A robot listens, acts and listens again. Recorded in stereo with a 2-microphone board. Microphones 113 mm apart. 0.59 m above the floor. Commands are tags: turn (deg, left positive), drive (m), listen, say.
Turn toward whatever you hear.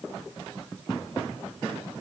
<listen/>
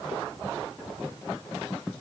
<listen/>
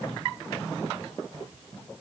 <say>I can't make out anything.</say>